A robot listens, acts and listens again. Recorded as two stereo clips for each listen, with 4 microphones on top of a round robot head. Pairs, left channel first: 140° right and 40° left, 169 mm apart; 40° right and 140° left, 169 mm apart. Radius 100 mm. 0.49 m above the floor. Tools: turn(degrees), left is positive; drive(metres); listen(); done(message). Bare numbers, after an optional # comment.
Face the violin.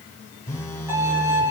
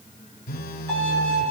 # The violin: 115° left.
turn(115)
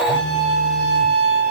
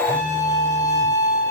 # The violin is now 35° left.
turn(35)
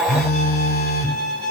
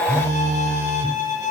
# The violin is now 10° left.
turn(10)
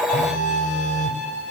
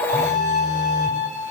done("Facing the violin, over 4 m away.")